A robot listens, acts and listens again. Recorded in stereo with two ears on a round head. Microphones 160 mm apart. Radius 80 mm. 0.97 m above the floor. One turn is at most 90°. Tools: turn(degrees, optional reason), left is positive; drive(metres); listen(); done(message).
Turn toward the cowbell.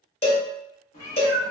turn(degrees=35, reason="The cowbell: about 35° left or 145° left.")
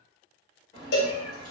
turn(degrees=90, reason="So it is at 115° left.")
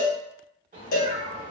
turn(degrees=50, reason="The cowbell is now 50° left.")
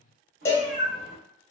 turn(degrees=15, reason="The cowbell is now 15° left.")
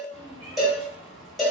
done("Found it: a cowbell, straight ahead.")